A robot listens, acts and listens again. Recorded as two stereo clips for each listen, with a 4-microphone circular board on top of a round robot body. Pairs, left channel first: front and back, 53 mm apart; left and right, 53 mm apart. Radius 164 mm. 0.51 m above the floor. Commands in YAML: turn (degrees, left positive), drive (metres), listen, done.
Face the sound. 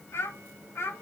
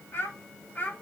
turn: 35
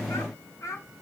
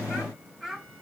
done: "Facing the child speaking."